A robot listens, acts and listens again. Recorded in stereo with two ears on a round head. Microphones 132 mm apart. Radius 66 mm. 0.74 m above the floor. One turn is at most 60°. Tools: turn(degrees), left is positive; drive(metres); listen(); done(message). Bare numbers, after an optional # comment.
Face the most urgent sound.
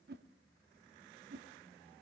listen()
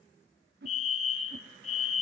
# The fire alarm: about 45° left or 135° left.
turn(45)
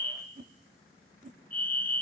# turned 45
# So it is at 10° left.
turn(10)
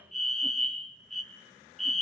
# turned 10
done("Found it: a fire alarm, straight ahead, 2 to 4 m away.")